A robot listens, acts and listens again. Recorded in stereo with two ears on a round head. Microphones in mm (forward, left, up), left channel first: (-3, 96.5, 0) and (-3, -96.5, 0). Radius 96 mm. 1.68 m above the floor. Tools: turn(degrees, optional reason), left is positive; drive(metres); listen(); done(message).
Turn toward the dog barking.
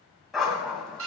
turn(degrees=30)
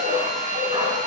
turn(degrees=-20, reason="So it is at 20° right.")
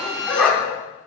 done("Found it: a dog barking, straight ahead.")